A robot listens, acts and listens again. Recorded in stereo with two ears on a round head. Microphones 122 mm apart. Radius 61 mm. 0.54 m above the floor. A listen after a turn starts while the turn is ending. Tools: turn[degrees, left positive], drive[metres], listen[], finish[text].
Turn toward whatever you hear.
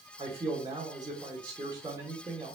Thought: The man speaking: about 30° right or 150° right.
Action: turn[-30]
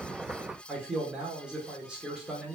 Action: finish[Facing the man speaking, 1 to 2 m away.]